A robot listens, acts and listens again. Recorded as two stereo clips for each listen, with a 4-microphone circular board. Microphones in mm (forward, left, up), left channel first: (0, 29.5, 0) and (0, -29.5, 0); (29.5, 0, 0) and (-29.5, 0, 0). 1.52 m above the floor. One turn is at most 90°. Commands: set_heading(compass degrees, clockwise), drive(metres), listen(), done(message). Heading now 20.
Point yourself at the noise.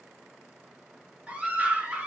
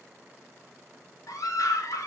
set_heading(40)
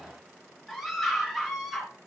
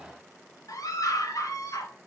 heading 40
done("Found it: a scream, straight ahead.")